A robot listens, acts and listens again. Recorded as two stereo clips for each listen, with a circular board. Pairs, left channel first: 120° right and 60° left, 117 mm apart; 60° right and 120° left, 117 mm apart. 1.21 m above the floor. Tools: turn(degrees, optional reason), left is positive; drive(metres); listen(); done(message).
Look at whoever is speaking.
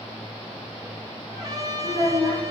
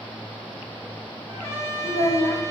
turn(degrees=-75, reason="The child speaking: 75° right.")
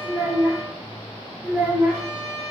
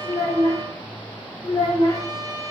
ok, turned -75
turn(degrees=-15, reason="The child speaking is now 15° right.")
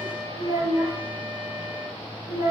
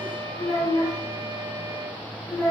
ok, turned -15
done("Facing the child speaking, 1 to 2 m away.")